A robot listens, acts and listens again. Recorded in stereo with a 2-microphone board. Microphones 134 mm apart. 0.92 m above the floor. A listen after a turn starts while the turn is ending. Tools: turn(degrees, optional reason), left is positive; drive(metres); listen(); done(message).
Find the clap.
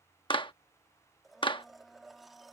turn(degrees=40, reason="The clap: about 40° left or 140° left.")
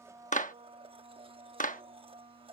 turn(degrees=100, reason="So it is at 100° left.")
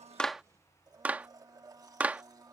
turn(degrees=-10, reason="The clap is now 10° right.")
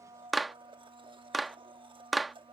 done("Found it: a clap, straight ahead.")